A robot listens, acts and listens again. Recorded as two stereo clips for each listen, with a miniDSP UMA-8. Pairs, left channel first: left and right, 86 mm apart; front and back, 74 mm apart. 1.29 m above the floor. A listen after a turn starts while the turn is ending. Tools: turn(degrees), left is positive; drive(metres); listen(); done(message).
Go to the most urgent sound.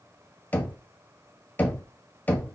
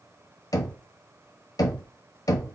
listen()
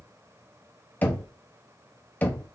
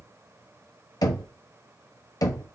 listen()
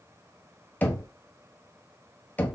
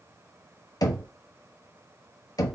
done("I can't make out anything urgent, only knocking.")